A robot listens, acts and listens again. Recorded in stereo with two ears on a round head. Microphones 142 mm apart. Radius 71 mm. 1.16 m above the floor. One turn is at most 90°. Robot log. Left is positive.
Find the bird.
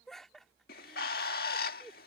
note: The bird: about 65° left or 115° left.
cmd yaw +65
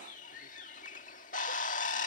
note: So it is at 50° left.
cmd yaw +50
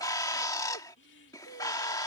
note: The bird is now 25° left.
cmd yaw +25
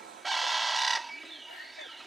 end: Found it: a bird, straight ahead.